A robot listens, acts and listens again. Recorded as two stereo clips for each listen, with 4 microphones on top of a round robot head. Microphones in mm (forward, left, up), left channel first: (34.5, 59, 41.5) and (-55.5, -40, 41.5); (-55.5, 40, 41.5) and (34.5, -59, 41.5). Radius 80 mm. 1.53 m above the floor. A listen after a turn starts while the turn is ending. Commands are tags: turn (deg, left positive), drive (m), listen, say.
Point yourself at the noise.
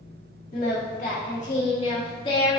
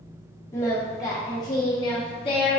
<turn deg="95"/>
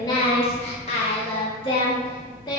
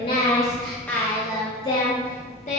<turn deg="100"/>
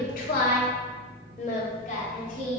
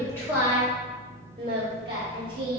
<turn deg="10"/>
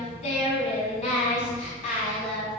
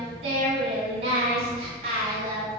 <say>Facing the singing.</say>